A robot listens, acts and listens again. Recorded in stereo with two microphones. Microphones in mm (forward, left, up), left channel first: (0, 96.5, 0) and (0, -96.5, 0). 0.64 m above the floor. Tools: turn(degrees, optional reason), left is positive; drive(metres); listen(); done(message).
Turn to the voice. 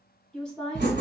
turn(degrees=30)
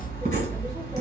listen()
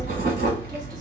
listen()
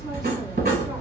done("I heard a woman speaking, but can't make it out now. It was about 25° right or 145° left.")